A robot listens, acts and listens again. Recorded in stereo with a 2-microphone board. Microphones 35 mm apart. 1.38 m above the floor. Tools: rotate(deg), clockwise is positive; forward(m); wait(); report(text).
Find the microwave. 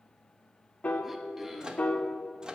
rotate(25)
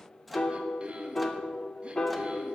report("Facing the microwave.")